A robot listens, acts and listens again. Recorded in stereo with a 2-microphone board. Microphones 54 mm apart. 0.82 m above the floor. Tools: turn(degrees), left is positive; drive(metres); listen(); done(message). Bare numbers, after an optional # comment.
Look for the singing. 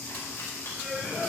# The singing: about 20° left or 160° left.
turn(20)
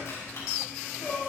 # The singing: about 20° left or 160° left.
turn(20)
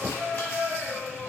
turn(30)
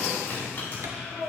done("Facing the singing, 2 to 4 m away.")